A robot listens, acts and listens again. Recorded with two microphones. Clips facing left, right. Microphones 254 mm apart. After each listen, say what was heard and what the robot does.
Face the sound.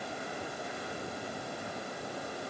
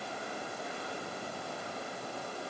Keep listening.
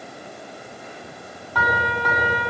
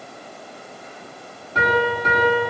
The piano: about 25° right or 155° right. Turn 25° right.
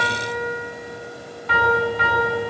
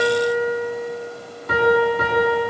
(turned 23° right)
So it is at 135° right. Turn 135° right.
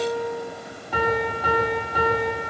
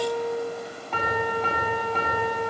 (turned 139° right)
Facing the piano.